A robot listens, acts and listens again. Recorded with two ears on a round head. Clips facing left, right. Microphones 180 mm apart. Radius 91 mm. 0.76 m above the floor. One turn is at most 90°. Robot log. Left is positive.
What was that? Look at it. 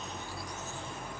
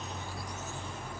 cmd idle
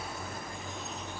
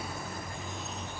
cmd idle
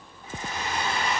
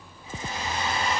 note: The hair dryer: about 45° left or 135° left.
cmd yaw +45
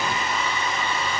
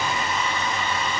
end: Facing the hair dryer, 2 to 4 m away.